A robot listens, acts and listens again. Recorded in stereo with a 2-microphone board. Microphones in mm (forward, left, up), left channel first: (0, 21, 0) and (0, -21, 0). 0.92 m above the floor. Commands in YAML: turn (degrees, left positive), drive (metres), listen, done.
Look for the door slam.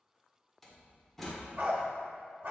turn: 30
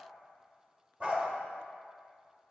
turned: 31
listen: true
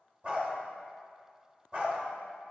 done: "I heard a door slam, but can't make it out now. It was about 30° right or 145° left."